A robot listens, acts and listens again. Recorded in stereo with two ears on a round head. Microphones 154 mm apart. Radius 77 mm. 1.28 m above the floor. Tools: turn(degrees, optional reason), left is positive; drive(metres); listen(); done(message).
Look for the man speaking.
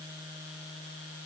listen()
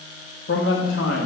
turn(degrees=90)
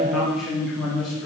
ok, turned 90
done("Facing the man speaking, 2 to 4 m away.")